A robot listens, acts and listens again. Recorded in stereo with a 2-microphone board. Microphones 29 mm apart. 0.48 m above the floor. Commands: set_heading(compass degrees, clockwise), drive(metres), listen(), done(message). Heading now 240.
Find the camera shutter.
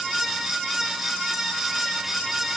listen()
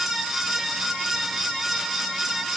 listen()
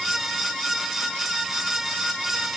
done("I can't make out a camera shutter to turn to.")